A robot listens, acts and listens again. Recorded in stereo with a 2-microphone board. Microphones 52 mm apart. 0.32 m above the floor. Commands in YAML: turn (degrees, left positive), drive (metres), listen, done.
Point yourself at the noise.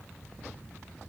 listen: true
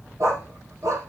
turn: -75
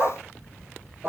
turn: -40
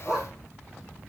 turn: -15
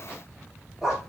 turn: -10
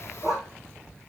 turn: -10
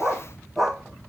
done: "Facing the dog barking."